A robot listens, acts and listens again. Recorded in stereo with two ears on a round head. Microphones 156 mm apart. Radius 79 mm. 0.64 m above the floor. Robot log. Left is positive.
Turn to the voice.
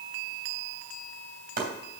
cmd idle
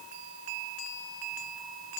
cmd idle
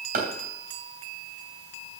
end: I can't make out anyone speaking to turn to.